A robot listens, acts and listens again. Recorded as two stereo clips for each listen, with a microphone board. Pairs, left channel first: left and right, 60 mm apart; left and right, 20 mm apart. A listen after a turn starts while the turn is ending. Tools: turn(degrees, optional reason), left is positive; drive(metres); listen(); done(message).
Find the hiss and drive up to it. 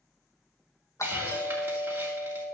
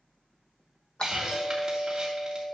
turn(degrees=-35, reason="The hiss: about 35° right or 145° right.")
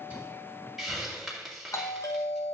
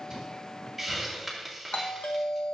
drive(metres=1.0)
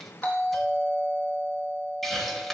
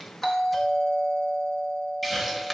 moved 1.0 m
drive(metres=1.0)
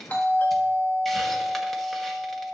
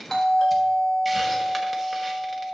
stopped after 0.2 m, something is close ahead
listen()
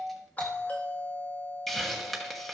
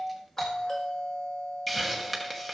done("I am next to the hiss.")